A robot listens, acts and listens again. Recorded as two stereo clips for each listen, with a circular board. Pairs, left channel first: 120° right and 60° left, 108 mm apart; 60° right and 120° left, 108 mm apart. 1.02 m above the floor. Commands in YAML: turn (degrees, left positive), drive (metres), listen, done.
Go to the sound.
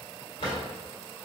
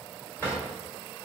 turn: -130
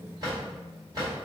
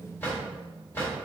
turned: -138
turn: 10
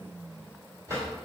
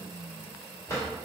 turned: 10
drive: 1.0
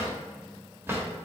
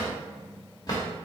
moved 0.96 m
turn: -10
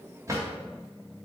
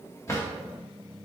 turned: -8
drive: 1.0
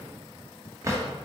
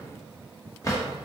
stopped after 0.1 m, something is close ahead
done: "I am next to the drawer."